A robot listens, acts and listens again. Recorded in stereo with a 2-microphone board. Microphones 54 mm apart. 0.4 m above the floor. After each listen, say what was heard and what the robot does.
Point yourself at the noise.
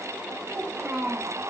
The child speaking: about 30° right or 150° right. Turn 30° right.
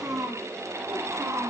So it is at 130° right. Turn 130° right.
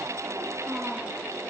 The child speaking is now 25° right. Turn 25° right.
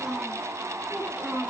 The child speaking is now 10° right. Turn 10° right.
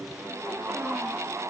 Keep listening.
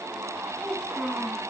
Facing the child speaking.